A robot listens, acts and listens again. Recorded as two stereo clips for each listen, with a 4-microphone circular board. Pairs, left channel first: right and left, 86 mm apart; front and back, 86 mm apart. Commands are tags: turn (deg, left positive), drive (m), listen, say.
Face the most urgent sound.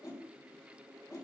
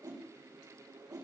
<listen/>
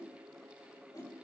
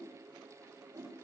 <listen/>
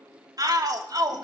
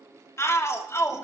<turn deg="50"/>
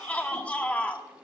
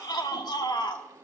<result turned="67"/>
<turn deg="-20"/>
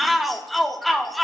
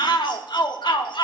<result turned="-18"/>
<say>Found it: a shout, straight ahead, 1 to 2 m away.</say>